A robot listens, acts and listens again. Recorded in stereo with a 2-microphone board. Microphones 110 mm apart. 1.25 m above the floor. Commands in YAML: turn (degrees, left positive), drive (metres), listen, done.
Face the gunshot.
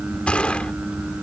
turn: 30
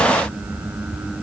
listen: true
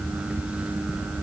done: "I heard a gunshot, but can't make it out now. It was about 20° right or 140° left."